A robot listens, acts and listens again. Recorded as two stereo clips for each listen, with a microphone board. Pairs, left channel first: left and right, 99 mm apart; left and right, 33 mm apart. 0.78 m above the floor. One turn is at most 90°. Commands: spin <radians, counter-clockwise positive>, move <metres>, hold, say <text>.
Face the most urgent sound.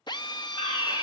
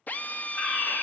spin 1.22
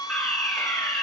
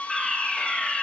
say Found it: a fire alarm, straight ahead.